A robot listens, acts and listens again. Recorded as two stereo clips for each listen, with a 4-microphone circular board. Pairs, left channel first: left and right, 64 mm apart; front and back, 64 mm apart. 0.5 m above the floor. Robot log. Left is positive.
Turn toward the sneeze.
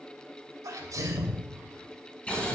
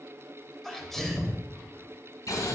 note: The sneeze: 85° right.
cmd yaw -85
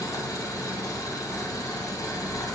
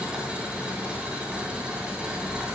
end: I heard a sneeze from this way, but can't make it out now.